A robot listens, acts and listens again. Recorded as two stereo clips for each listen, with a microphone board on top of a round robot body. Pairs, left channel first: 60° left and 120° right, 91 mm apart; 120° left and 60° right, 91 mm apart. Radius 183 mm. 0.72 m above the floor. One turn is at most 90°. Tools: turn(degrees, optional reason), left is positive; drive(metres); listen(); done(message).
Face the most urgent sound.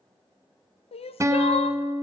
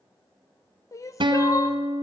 turn(degrees=65, reason="The crying: 65° left.")
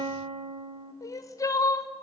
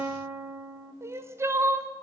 done("Found it: crying, straight ahead.")